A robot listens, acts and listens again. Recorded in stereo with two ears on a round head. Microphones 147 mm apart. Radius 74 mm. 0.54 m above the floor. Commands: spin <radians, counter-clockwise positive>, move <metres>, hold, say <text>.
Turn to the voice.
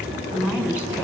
spin -0.52
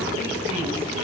hold
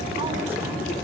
hold
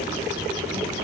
say I heard a woman speaking, but can't make it out now. It was about 20° left or 140° right.